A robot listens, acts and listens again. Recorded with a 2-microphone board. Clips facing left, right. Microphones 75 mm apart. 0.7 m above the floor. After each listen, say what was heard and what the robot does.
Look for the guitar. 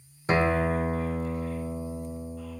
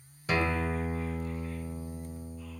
The guitar: about 30° left or 150° left. Turn 30° left.
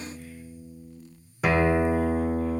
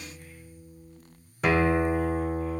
Found it: a guitar, straight ahead.